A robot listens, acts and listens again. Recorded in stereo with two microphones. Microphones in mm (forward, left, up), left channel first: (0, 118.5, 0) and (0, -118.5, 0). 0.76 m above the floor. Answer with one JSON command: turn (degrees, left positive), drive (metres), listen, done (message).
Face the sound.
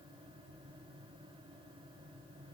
{"listen": true}
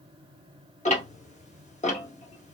{"turn": 30}
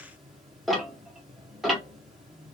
{"done": "Facing the ticking, under 1 m away."}